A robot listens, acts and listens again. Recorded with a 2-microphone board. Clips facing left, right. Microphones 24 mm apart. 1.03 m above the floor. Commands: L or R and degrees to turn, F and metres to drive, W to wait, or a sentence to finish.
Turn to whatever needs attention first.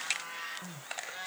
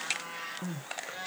R40
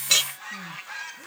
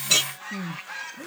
R95
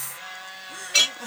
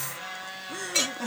Facing the crying.